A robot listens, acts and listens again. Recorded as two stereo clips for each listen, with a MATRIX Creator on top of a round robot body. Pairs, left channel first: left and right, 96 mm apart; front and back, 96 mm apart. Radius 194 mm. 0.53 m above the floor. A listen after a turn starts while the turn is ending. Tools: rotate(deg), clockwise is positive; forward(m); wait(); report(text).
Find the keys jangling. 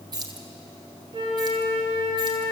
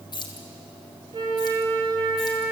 rotate(45)
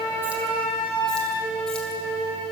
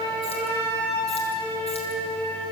wait()
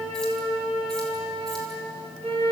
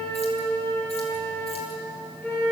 wait()
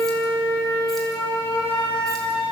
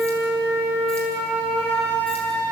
report("I heard keys jangling from this way, but can't make it out now.")